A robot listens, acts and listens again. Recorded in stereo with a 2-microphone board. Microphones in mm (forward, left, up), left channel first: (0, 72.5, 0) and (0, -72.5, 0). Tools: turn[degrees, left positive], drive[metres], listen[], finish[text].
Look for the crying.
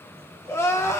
Thought: The crying: about 20° left or 160° left.
Action: turn[20]
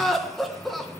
Action: finish[Found it: crying, straight ahead, 1 to 2 m away.]